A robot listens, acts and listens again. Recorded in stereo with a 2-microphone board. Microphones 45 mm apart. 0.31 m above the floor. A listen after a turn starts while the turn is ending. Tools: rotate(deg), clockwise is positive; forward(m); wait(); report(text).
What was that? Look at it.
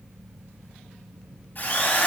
rotate(-50)
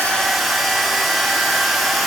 report("Found it: a drill, straight ahead.")